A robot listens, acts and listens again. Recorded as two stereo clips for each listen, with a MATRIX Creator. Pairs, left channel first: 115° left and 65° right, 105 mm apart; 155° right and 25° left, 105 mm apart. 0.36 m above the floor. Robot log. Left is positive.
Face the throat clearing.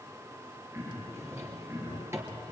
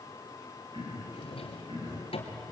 end: Found it: throat clearing, straight ahead.